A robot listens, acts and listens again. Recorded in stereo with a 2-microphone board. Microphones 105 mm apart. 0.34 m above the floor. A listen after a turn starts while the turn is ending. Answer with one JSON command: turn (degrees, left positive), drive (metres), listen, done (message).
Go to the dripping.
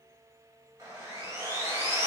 {"listen": true}
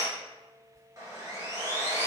{"turn": -65}
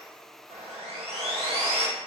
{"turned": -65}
{"listen": true}
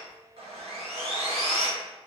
{"listen": true}
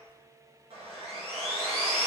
{"done": "I heard dripping, but can't make it out now. It was about straight ahead or 50° right. I did not reach it."}